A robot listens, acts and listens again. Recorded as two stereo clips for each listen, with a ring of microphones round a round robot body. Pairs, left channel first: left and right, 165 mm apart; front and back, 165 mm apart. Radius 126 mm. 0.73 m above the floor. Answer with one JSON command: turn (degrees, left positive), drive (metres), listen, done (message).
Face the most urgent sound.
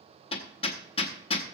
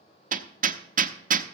{"listen": true}
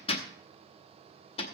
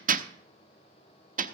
{"listen": true}
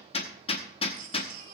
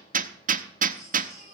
{"turn": -60}
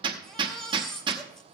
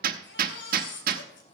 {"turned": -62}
{"done": "Facing the baby crying."}